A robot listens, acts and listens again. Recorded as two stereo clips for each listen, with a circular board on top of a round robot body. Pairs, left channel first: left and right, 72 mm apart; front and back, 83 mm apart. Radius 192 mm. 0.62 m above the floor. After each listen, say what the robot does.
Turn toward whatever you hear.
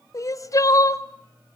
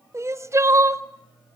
Turn 125° left.
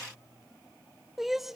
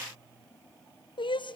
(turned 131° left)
Facing the crying.